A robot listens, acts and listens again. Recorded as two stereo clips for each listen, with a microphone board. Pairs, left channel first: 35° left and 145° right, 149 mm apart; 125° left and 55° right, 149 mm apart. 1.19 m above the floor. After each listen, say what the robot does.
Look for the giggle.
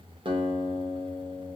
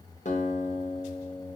Keep listening.
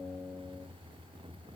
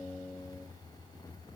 Keep listening.
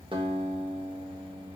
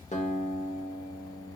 I can't make out a giggle, only a guitar.